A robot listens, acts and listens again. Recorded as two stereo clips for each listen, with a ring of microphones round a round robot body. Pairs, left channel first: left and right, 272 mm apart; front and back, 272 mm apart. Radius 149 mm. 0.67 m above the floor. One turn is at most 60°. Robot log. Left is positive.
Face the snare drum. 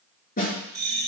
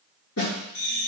note: The snare drum: 30° left.
cmd yaw +30
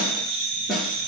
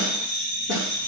end: Facing the snare drum.